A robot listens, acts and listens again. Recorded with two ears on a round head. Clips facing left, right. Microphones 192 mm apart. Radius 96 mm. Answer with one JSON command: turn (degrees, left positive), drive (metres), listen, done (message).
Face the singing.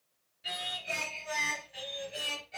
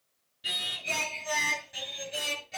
{"turn": -60}
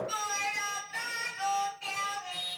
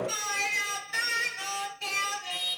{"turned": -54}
{"turn": -55}
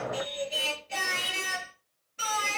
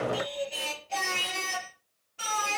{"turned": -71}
{"turn": 20}
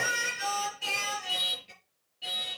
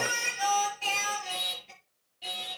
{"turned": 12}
{"done": "Facing the singing, over 4 m away."}